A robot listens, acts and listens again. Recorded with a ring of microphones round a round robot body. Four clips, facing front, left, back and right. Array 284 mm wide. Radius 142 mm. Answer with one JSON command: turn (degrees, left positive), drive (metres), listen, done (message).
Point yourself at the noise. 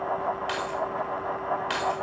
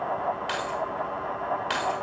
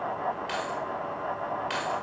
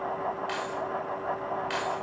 {"turn": 60}
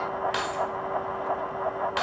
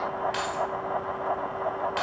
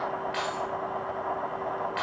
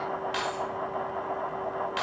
{"done": "Facing the keys jangling, 2 to 4 m away."}